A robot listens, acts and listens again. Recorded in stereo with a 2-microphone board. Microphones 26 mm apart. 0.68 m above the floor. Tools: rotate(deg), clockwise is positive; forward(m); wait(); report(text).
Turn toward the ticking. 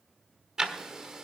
rotate(20)
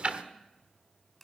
rotate(140)
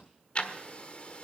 rotate(-45)
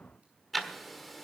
report("Facing the ticking.")